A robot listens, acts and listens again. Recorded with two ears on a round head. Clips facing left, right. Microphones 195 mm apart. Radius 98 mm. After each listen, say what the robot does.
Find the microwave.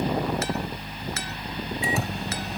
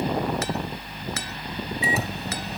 Turn 30° left.
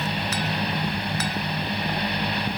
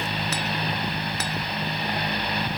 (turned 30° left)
Keep listening.
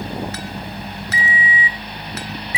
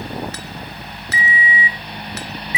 Turn 150° left.
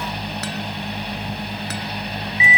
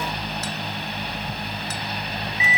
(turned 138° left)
Turn 15° left.
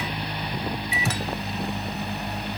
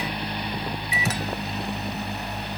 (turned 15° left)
Facing the microwave.